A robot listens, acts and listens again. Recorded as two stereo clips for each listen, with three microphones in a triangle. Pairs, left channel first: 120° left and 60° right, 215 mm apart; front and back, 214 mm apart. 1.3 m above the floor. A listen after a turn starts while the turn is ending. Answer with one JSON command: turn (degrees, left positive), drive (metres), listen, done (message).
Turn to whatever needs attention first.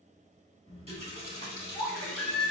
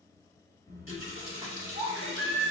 {"turn": -155}
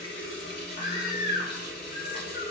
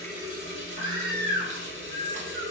{"done": "Facing the baby crying."}